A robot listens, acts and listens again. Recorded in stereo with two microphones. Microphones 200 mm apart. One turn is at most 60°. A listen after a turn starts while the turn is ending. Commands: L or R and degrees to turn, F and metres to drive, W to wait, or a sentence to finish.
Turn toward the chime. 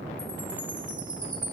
R30
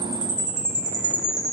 R60
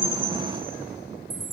R60
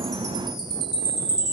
R20
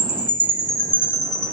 Facing the chime.